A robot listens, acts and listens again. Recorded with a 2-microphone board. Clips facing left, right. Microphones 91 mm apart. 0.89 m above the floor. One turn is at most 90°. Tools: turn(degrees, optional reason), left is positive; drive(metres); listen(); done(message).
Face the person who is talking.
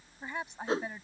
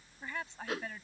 turn(degrees=20, reason="The woman speaking: about 20° left or 160° left.")
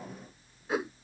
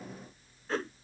listen()
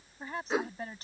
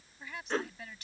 turn(degrees=90, reason="So it is at 140° left.")
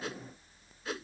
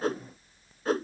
turn(degrees=50, reason="Nothing new. It was at 50° left.")
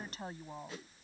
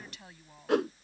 turn(degrees=35, reason="The woman speaking is now 35° left.")
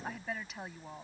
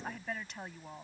done("Facing the woman speaking.")